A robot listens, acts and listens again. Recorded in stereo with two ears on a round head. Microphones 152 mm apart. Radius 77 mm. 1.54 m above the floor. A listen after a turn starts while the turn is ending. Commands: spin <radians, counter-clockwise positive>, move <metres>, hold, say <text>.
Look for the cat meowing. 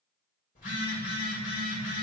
hold
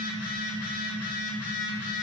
hold
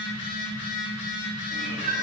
spin -0.96
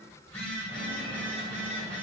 hold
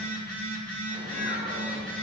hold
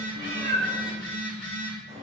spin -1.22
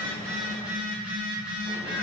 hold
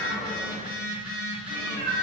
spin -0.44
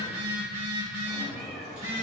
say Found it: a cat meowing, straight ahead.